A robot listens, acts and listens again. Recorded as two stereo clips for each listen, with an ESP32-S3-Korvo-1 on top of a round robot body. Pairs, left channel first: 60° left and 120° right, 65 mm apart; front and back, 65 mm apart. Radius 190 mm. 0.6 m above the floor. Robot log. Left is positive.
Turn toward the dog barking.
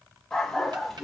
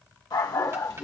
note: The dog barking: 30° right.
cmd yaw -30
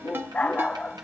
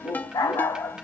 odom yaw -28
note: The dog barking is now 15° right.
cmd yaw -15
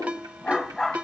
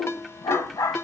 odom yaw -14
note: The dog barking is now 25° right.
cmd yaw -25
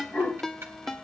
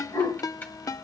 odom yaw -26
note: The dog barking is now 10° right.
cmd yaw -10
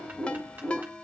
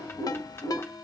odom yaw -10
note: The dog barking is now 20° right.
cmd yaw -20
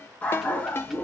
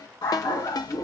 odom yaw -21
note: The dog barking is now 10° right.
cmd yaw -10
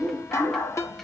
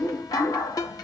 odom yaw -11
end: Facing the dog barking.